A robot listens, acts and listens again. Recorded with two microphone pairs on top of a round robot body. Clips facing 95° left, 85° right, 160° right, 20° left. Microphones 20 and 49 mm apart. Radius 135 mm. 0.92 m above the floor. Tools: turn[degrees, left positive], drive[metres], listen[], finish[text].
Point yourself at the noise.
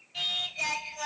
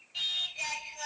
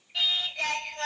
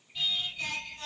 Thought: The singing: straight behind.
Action: turn[180]
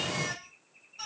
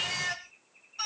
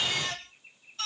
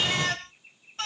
Thought: The singing is now 25° right.
Action: turn[-25]
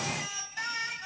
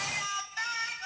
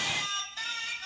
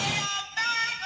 Thought: The singing is now 10° right.
Action: turn[-10]
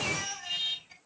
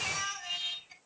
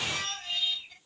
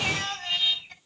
Action: finish[Found it: singing, straight ahead.]